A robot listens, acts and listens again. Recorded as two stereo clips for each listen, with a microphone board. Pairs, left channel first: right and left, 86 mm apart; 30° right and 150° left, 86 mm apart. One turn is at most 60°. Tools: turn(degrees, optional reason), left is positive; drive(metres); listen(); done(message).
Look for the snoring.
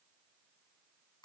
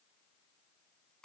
listen()
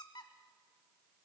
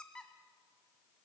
listen()
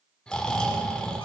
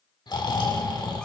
turn(degrees=-10, reason="The snoring: 10° right.")
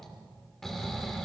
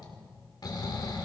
done("Found it: snoring, straight ahead.")